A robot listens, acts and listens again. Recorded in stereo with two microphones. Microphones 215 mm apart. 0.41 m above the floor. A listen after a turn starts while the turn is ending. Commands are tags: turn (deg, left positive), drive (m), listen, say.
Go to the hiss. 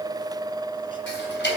<listen/>
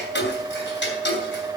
<listen/>
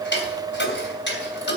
<say>I can't make out a hiss, only ticking.</say>